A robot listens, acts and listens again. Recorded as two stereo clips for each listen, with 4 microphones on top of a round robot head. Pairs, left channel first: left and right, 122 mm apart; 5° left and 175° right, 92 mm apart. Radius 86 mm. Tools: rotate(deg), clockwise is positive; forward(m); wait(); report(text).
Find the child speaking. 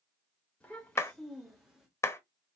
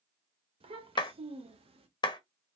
rotate(-180)
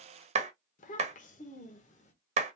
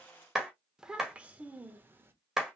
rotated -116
rotate(-115)
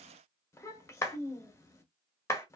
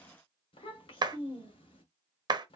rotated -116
rotate(-20)
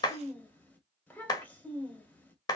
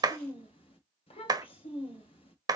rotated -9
rotate(-15)
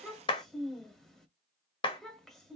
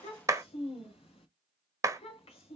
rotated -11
report("Facing the child speaking, 1 to 2 m away.")